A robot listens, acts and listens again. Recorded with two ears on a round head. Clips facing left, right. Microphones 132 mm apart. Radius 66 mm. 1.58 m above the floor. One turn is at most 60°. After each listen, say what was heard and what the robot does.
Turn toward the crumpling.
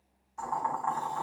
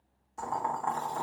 Keep listening.
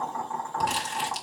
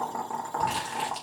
The crumpling: about 45° left or 135° left. Turn 45° left.
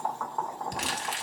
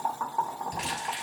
So it is at 80° left. Turn 60° left.
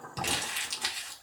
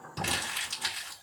The crumpling is now 15° left. Turn 15° left.
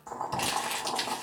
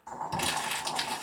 Found it: crumpling, straight ahead, 2 to 4 m away.